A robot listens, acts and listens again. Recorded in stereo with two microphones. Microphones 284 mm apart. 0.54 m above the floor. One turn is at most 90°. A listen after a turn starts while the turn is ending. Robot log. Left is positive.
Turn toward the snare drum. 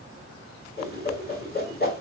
cmd idle
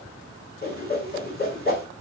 cmd idle
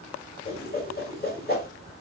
end: I can't make out a snare drum to turn to.